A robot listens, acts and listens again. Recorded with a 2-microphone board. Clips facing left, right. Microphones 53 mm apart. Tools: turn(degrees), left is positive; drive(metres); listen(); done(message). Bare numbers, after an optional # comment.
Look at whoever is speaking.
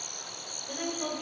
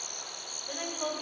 # The woman speaking: about 15° right or 165° right.
turn(-15)
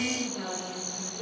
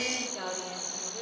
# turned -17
# So it is at 145° right.
turn(-145)
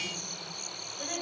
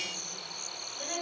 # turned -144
done("Found it: a woman speaking, straight ahead.")